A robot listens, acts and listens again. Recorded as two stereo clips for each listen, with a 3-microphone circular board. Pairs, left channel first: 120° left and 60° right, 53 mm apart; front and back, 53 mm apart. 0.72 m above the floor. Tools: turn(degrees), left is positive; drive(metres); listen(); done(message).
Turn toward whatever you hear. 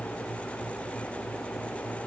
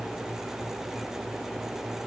listen()
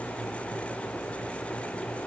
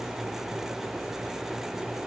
listen()
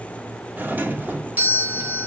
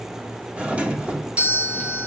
turn(degrees=-115)
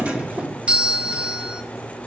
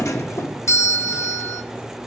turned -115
done("Facing the doorbell.")